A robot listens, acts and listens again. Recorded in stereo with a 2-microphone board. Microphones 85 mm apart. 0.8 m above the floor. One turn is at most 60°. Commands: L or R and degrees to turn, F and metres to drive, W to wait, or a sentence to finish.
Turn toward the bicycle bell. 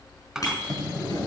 L45
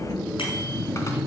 W
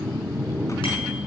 W
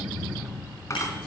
I heard a bicycle bell, but can't make it out now. It was about straight ahead or 90° left.